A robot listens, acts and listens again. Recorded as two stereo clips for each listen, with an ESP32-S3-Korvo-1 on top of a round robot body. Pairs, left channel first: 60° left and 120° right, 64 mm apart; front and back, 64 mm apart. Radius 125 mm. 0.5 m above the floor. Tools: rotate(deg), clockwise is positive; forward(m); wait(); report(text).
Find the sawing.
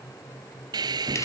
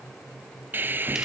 rotate(120)
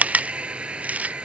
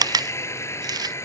rotate(45)
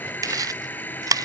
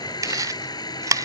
report("Facing the sawing.")